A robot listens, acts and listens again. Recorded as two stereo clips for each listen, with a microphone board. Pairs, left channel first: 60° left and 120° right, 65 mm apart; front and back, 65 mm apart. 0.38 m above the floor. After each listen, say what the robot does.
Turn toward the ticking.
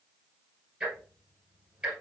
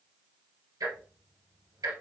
Turn 170° left.
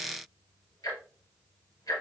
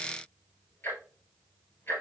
Turn 55° left.
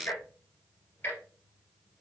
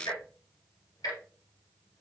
Found it: ticking, straight ahead.